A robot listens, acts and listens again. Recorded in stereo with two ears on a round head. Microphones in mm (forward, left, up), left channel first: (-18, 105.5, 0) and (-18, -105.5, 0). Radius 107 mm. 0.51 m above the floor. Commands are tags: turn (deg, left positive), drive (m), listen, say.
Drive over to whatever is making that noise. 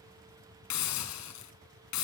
<turn deg="90"/>
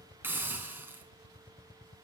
<turn deg="-10"/>
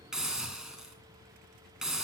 <drive m="1.0"/>
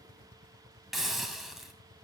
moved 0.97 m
<drive m="1.0"/>
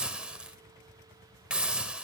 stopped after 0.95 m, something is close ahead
<say>I am next to the hiss.</say>